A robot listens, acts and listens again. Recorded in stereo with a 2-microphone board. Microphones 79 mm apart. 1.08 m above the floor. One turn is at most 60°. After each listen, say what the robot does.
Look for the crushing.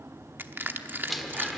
Turn 25° right.
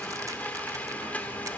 Keep listening.
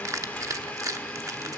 Turn 60° right.
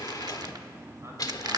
Turn 60° right.
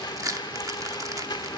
Turn 60° right.
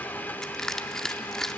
Facing the crushing, under 1 m away.